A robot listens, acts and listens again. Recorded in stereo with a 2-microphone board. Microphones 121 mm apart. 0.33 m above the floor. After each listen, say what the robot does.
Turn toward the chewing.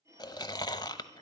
Turn 35° left.
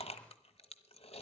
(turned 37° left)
Turn 100° left.
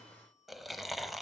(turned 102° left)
Facing the chewing, under 1 m away.